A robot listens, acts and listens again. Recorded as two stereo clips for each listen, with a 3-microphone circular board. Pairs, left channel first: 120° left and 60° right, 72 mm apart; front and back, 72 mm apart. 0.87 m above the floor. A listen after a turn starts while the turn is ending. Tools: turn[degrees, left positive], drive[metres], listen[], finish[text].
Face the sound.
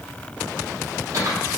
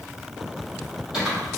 Thought: The typing on a keyboard: 100° right.
Action: turn[-100]
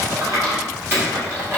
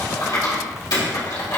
Action: finish[Facing the typing on a keyboard, 2 to 4 m away.]